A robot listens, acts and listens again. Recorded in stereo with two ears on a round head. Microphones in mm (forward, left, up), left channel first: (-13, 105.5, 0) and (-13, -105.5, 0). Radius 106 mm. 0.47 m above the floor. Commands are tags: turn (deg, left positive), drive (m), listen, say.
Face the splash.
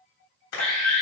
<turn deg="65"/>
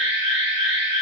<listen/>
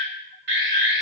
<say>I heard a splash, but can't make it out now. It was about straight ahead or 50° left.</say>